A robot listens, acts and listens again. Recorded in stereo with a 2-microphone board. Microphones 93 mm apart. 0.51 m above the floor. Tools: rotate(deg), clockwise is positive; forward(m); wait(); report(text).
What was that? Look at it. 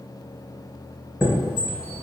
rotate(30)
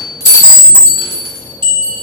rotate(135)
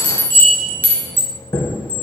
rotate(-20)
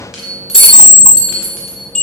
rotate(10)
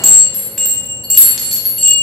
report("Facing the chime.")